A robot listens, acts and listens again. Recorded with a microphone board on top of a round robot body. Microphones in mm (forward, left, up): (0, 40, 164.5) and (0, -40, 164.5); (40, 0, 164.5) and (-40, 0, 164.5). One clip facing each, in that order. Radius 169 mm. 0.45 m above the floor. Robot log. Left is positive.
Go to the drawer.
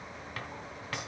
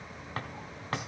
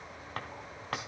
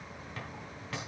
note: The drawer: 35° right.
cmd yaw -35
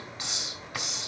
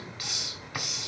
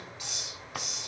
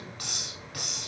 cmd idle
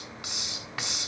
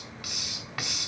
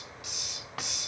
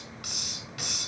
cmd idle
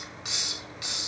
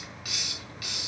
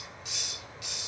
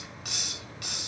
end: Facing where the drawer came from. I can't hear it now. I did not reach it.